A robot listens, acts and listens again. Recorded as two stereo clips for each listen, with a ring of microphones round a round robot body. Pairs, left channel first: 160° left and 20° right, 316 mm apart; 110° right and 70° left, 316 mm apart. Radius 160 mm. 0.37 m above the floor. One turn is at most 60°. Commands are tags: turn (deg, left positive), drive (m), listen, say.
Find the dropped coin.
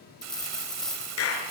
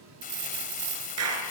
<turn deg="60"/>
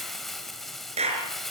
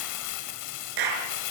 <turn deg="10"/>
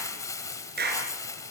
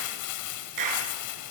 <say>Facing where the dropped coin came from. I can't hear it now.</say>